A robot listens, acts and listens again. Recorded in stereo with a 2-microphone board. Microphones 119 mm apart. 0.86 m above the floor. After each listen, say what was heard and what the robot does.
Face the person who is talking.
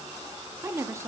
The woman speaking: about 25° right or 155° right. Turn 25° right.
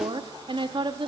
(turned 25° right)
So it is at 135° right. Turn 135° right.
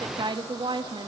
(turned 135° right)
The woman speaking is now 40° right. Turn 40° right.
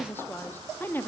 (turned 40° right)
The woman speaking is now 20° left. Turn 20° left.
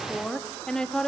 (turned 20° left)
Found it: a woman speaking, straight ahead, 1 to 2 m away.